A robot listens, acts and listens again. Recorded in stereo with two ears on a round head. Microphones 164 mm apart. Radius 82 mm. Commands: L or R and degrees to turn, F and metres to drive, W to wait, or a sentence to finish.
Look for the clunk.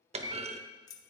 R35
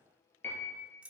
W
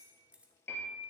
I heard a clunk, but can't make it out now. It was about straight ahead or 110° right.